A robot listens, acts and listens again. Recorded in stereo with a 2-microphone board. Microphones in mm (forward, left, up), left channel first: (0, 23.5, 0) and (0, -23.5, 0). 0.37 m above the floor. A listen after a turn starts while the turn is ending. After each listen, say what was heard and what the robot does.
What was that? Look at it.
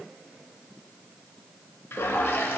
The toilet flushing: about 55° left or 125° left. Turn 55° left.
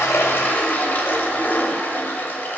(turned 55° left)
So it is at 50° left. Turn 50° left.
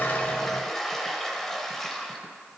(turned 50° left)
The toilet flushing is now 10° left. Turn 10° left.
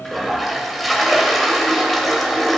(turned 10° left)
Facing the toilet flushing, under 1 m away.